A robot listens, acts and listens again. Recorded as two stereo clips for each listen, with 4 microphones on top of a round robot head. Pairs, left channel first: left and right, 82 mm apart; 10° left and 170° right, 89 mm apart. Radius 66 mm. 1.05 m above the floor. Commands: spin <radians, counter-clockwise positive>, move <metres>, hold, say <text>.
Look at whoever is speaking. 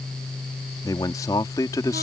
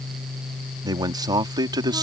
spin 2.62
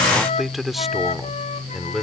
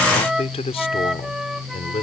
say Facing the man speaking.